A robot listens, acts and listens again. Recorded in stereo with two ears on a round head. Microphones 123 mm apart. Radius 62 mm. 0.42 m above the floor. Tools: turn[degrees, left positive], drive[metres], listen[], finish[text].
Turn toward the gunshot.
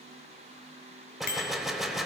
Action: turn[30]
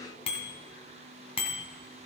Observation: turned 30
Action: listen[]
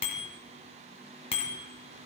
Action: finish[I heard a gunshot, but can't make it out now. It was about 30° right or 150° left.]